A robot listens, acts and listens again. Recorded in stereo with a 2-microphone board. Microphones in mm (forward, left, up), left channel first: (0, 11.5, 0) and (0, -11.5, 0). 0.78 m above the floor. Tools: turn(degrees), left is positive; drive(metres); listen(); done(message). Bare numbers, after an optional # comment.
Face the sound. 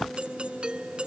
# The doorbell: about 50° right or 130° right.
turn(-50)
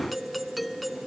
done("Found it: a doorbell, straight ahead.")